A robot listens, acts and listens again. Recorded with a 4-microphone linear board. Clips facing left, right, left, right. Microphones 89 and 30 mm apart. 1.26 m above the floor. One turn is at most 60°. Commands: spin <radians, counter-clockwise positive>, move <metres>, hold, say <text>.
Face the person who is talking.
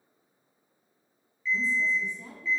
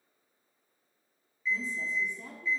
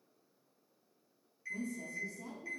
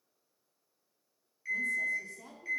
spin -1.05
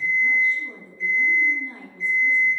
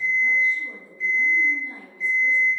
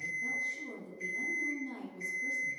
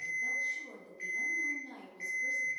spin -0.26
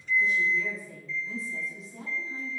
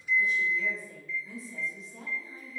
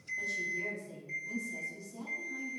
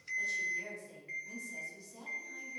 say Facing the woman speaking.